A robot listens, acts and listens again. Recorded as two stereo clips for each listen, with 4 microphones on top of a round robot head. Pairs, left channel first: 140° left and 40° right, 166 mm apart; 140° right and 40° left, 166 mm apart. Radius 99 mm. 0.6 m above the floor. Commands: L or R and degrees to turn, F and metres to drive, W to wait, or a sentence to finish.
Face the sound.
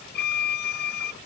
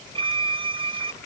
L105
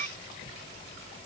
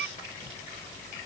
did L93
L10
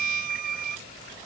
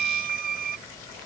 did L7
Found it: a violin, straight ahead.